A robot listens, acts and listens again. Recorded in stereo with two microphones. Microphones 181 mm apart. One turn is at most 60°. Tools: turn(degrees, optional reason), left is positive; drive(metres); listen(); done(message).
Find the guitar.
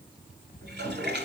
listen()
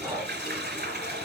listen()
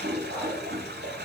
done("I can't make out a guitar, only breathing and a toilet flushing.")